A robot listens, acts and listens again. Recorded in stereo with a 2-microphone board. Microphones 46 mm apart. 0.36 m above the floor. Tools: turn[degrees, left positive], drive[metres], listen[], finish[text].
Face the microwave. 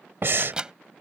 Thought: The microwave: about 20° right or 160° right.
Action: turn[-20]
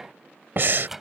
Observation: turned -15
Action: finish[Found it: a microwave, straight ahead.]